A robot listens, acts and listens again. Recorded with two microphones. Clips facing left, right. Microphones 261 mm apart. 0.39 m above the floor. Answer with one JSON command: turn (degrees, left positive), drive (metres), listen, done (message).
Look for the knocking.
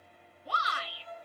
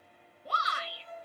{"listen": true}
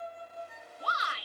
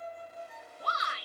{"listen": true}
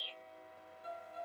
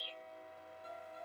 {"done": "I can't make out knocking to turn to."}